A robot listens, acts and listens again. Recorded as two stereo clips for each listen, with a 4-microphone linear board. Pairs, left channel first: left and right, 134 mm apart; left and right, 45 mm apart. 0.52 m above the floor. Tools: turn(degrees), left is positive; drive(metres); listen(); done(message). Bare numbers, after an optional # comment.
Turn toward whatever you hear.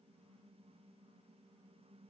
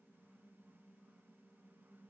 listen()
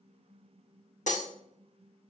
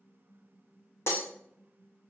# The breaking glass: about 65° left or 115° left.
turn(65)
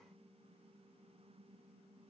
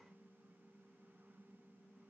listen()
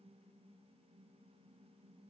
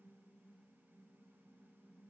done("I heard breaking glass, but can't make it out now. It was about straight ahead or 50° left.")